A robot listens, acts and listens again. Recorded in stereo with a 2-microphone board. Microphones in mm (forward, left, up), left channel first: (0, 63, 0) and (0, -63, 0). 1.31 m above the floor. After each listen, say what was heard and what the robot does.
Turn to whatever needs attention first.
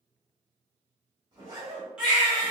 Turn 30° right.
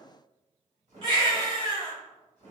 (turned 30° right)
So it is at 140° right. Turn 140° right.
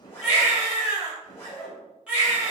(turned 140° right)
The baby crying is now 10° right. Turn 10° right.
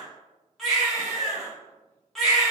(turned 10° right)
Facing the baby crying, 1 to 2 m away.